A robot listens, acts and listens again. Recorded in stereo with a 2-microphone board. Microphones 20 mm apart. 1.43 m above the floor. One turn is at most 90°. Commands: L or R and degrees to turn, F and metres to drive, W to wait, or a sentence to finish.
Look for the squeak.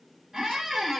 R30
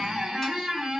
R90
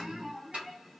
R45
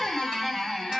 Found it: a squeak, straight ahead, under 1 m away.